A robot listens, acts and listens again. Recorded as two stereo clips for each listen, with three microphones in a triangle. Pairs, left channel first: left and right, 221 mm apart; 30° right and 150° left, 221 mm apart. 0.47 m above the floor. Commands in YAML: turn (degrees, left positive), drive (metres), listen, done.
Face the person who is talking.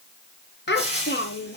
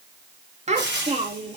turn: 100
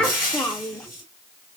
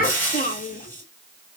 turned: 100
done: "Found it: a child speaking, straight ahead, under 1 m away."